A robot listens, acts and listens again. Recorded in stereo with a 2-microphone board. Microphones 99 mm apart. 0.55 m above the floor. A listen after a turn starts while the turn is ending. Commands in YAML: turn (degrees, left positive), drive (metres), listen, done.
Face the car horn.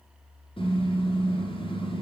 turn: 60
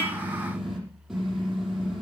done: "Facing the car horn."